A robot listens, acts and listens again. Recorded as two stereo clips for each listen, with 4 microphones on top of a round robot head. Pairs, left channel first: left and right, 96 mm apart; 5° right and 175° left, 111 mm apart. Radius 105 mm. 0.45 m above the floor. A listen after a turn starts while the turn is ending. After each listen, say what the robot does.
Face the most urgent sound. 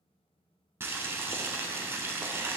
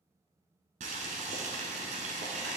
Keep listening.
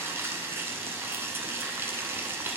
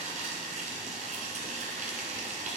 Keep listening.
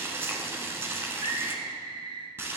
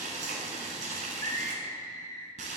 Turn 65° right.
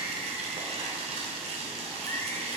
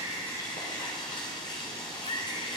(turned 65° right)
Keep listening.
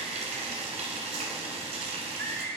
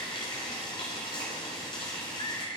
Turn 25° left.
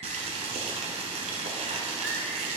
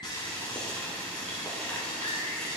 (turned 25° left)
Keep listening.
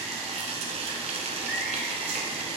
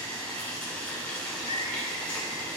Keep listening.
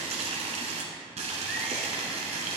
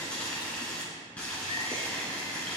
I heard a scream from this way, but can't make it out now.